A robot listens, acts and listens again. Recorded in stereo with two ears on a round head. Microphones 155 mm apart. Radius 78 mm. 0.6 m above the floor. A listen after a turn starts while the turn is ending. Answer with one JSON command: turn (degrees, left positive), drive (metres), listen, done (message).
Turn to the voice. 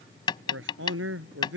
{"turn": -90}
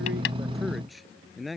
{"done": "Facing the man speaking."}